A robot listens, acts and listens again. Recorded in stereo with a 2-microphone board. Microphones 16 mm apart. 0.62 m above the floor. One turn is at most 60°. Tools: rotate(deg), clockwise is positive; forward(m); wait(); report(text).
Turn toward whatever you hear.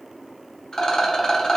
rotate(-45)
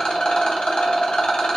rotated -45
rotate(-60)
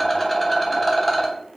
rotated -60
rotate(-10)
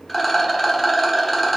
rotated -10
report("Found it: a rattle, straight ahead.")